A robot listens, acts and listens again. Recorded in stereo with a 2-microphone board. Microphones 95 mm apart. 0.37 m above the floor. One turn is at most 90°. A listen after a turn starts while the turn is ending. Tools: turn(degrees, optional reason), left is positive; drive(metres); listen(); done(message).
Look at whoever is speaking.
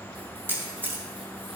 listen()
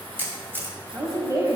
turn(degrees=-35, reason="The woman speaking: about 35° right or 145° right.")
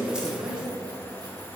turn(degrees=-90, reason="So it is at 105° right.")
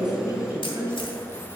turn(degrees=-30, reason="The woman speaking is now 30° right.")
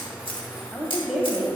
done("Found it: a woman speaking, straight ahead, 1 to 2 m away.")